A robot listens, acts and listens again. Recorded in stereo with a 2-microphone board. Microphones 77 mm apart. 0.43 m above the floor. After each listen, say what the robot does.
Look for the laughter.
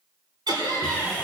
Turn 70° right.
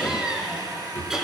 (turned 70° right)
Found it: laughter, straight ahead, over 4 m away.